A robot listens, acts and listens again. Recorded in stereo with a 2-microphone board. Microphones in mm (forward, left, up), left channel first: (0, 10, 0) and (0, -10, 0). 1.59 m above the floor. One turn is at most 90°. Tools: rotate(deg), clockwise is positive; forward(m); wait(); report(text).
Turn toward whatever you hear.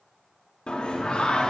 rotate(-55)
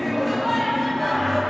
report("Facing the singing.")